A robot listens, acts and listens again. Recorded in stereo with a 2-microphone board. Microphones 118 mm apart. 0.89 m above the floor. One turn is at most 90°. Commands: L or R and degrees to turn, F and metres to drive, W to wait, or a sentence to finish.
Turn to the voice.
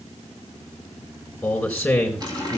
L30
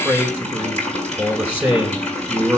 R25
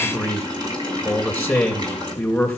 Found it: a man speaking, straight ahead.